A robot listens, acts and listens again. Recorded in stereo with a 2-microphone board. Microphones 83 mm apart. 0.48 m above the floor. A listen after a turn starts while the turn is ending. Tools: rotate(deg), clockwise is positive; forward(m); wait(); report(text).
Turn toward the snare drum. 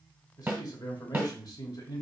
rotate(25)
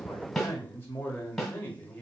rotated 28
report("Facing the snare drum, 1 to 2 m away.")